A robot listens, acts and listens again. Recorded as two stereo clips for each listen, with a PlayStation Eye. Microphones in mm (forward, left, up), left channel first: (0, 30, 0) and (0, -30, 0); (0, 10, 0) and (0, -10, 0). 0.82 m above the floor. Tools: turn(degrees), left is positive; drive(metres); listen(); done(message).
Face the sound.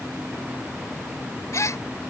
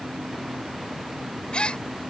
turn(degrees=60)
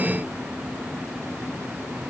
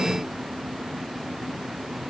listen()
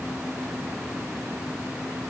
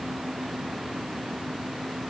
done("I heard a gasp, but can't make it out now. It was about straight ahead or 60° left.")